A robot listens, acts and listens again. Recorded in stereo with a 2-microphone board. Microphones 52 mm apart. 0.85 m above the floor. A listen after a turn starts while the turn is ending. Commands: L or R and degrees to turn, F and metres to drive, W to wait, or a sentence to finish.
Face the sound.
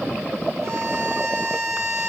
R90
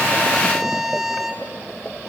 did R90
Facing the violin.